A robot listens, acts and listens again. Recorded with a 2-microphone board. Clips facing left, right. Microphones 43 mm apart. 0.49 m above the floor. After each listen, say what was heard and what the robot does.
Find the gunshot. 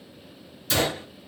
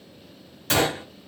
The gunshot: about 60° right or 120° right. Turn 60° right.
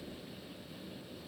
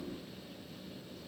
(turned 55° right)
Keep listening.
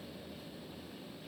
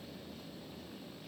I heard a gunshot, but can't make it out now. It was about 5° right or 65° right.